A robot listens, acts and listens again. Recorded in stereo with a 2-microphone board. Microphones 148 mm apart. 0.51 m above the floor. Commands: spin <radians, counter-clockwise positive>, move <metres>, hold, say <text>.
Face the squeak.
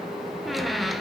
spin 0.52
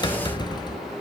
spin 2.62
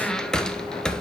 say Found it: a squeak, straight ahead.